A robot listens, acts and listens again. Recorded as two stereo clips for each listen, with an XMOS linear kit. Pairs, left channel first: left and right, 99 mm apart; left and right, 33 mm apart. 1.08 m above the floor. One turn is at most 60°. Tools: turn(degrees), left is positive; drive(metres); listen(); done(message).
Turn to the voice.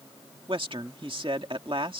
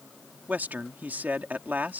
turn(degrees=-60)
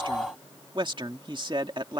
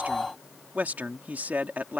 turn(degrees=-55)
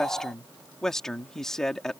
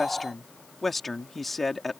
done("Found it: a man speaking, straight ahead.")